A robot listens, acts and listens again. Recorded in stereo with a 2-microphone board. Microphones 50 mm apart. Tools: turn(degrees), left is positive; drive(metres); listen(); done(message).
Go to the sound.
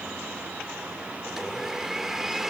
turn(degrees=-30)
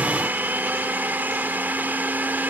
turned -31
turn(degrees=-140)
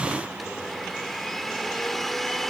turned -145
drive(metres=1.0)
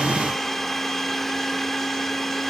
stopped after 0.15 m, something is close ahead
done("Blocked. The blender is further on, straight ahead.")